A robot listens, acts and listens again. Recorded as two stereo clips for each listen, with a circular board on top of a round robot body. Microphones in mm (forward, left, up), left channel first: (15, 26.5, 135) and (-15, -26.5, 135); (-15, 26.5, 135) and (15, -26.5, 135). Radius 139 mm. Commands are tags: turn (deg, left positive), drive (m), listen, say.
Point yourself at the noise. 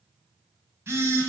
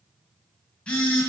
<turn deg="-165"/>
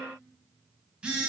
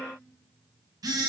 <turn deg="-45"/>
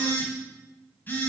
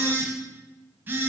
<say>Found it: a phone buzzing, straight ahead, 1 to 2 m away.</say>